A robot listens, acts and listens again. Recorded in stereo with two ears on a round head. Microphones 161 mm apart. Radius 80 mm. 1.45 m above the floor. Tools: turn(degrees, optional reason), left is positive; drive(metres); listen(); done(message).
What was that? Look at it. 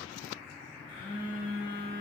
turn(degrees=65, reason="The phone buzzing: about 65° left or 115° left.")
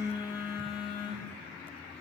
turn(degrees=25, reason="So it is at 25° left.")
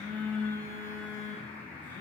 turn(degrees=15, reason="The phone buzzing is now 15° left.")
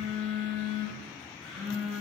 done("Found it: a phone buzzing, straight ahead, 2 to 4 m away.")